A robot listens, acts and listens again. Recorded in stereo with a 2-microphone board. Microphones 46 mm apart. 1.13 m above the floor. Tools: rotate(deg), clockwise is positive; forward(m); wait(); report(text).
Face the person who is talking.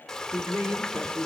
rotate(65)
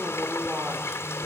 rotate(55)
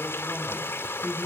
rotate(20)
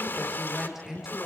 rotate(10)
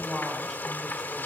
report("Facing the woman speaking, over 4 m away.")